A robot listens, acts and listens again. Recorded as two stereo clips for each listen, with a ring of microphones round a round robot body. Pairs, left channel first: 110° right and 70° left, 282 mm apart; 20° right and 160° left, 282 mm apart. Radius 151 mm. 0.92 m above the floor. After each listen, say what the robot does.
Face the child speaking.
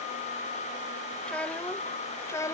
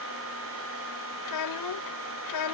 Turn 35° right.
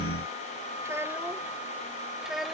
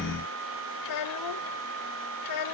Turn 20° right.
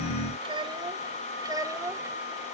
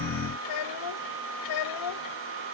Turn 10° right.
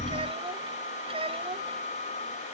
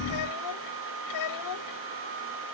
Found it: a child speaking, straight ahead.